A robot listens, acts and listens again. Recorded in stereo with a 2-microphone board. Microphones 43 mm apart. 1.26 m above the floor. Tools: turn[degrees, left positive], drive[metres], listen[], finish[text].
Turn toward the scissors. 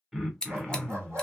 Thought: The scissors: about 15° left or 165° left.
Action: turn[15]
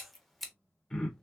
Action: finish[Facing the scissors.]